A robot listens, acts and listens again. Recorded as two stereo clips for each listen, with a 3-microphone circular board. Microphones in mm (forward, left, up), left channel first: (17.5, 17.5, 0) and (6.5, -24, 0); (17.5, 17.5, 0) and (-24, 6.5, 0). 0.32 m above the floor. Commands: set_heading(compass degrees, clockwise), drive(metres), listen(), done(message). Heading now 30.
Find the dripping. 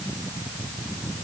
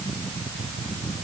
listen()
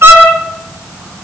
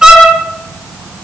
listen()
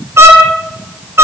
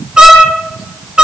done("I can't make out dripping to turn to.")